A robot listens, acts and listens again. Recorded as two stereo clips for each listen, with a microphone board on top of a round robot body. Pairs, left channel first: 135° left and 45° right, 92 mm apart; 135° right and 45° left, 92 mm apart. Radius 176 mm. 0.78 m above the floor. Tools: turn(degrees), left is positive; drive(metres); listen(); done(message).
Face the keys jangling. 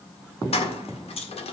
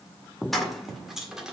turn(degrees=135)
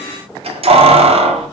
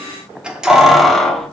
turn(degrees=-50)
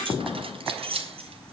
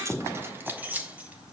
turn(degrees=-30)
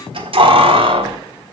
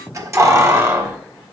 turn(degrees=-20)
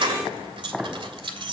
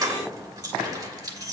done("Facing the keys jangling, 1 to 2 m away.")